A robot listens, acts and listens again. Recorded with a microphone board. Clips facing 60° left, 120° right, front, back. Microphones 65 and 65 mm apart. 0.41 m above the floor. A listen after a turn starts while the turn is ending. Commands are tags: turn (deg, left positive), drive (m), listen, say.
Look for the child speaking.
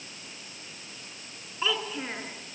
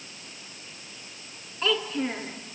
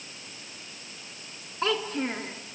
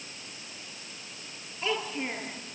<turn deg="-15"/>
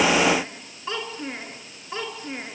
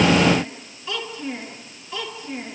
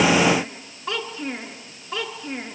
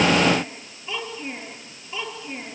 <turn deg="10"/>
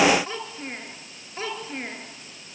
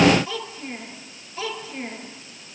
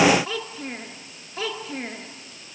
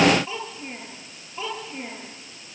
<say>Facing the child speaking.</say>